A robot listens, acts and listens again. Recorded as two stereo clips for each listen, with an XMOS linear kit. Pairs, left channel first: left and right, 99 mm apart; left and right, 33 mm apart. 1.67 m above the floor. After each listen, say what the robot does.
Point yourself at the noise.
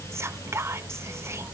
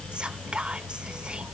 Turn 30° right.
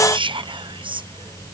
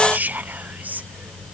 Turn 120° right.
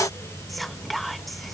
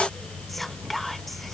Found it: whispering, straight ahead.